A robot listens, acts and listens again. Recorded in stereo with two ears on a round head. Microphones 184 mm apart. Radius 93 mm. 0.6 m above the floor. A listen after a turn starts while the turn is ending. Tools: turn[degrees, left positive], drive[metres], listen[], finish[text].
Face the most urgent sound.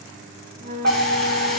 Thought: The fire alarm: about 50° right or 130° right.
Action: turn[-50]
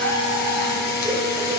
Action: listen[]
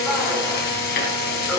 Action: listen[]
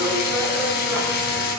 Action: finish[I heard a fire alarm, but can't make it out now. It was about straight ahead or 80° right.]